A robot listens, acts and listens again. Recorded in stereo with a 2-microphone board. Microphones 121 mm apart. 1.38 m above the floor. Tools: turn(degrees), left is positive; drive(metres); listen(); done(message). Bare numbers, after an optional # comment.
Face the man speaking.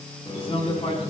# The man speaking: about 60° left or 120° left.
turn(60)
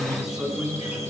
done("Facing the man speaking.")